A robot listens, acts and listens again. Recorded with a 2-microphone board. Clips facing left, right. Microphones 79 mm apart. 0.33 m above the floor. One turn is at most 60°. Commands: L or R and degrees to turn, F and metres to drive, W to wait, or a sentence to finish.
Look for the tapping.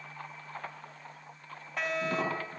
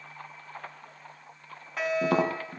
R60
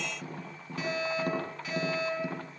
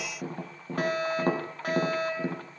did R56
R40
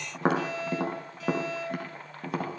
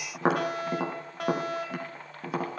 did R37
Found it: tapping, straight ahead.